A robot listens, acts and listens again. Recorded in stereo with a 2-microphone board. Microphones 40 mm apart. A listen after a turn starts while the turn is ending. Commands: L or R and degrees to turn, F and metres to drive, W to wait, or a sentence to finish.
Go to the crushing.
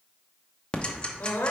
W
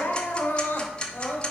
W
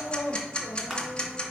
R30
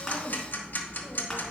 W
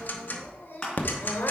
L25
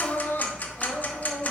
W
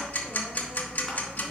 W
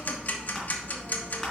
Facing where the crushing came from. I can't hear it now. I did not reach it.